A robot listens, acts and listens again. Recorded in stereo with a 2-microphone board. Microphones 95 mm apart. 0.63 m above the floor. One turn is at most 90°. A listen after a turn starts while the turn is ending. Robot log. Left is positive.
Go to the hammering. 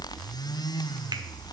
cmd idle
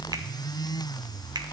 cmd idle
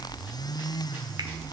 end: I can't make out hammering.